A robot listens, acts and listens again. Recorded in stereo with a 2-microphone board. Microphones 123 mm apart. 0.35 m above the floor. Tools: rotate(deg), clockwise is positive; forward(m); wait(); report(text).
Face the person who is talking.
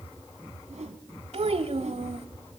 rotate(55)
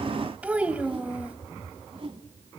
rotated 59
rotate(10)
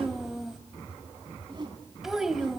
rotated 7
report("Found it: a child speaking, straight ahead, 1 to 2 m away.")